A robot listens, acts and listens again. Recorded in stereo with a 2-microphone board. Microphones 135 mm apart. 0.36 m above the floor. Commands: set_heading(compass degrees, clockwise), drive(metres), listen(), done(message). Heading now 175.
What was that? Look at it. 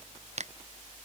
set_heading(235)
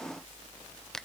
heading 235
done("Found it: a finger snap, straight ahead.")